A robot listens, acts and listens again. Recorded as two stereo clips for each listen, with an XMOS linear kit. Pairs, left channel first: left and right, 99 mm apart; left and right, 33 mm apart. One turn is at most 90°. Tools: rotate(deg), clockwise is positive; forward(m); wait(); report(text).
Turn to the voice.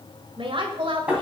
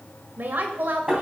rotate(60)
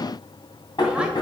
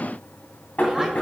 wait()
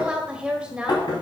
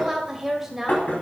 rotate(10)
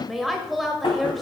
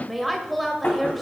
report("Facing the woman speaking, 1 to 2 m away.")